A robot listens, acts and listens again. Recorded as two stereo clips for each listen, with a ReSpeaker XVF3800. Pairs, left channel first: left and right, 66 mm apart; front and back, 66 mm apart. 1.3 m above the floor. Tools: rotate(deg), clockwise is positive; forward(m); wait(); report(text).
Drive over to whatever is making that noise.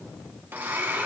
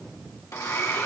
rotate(35)
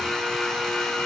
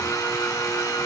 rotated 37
forward(1.0)
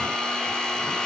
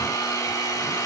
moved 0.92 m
rotate(-10)
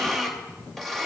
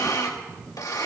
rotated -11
forward(1.0)
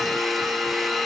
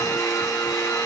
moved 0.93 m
forward(1.0)
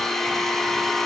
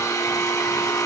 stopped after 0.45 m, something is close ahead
report("I am next to the blender.")